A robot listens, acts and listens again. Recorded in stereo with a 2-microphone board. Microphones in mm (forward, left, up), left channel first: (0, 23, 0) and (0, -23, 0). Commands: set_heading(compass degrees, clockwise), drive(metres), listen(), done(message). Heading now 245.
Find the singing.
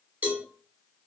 listen()
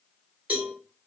listen()
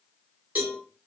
done("I can't make out singing, only a cowbell.")